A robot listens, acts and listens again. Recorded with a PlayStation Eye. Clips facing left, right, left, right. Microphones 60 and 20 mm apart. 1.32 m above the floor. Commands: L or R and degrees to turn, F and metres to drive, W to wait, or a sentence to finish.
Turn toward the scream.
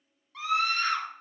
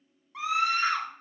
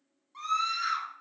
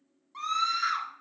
R20
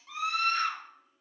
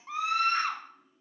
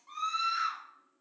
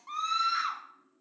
R140
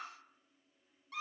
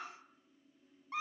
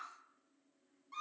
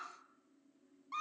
R30
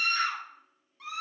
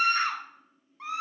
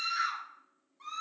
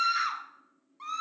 R30
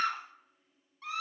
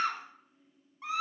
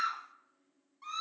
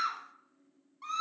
R15
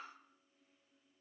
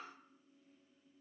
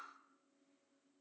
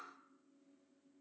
W
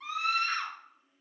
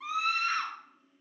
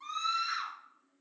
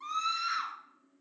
Found it: a scream, straight ahead.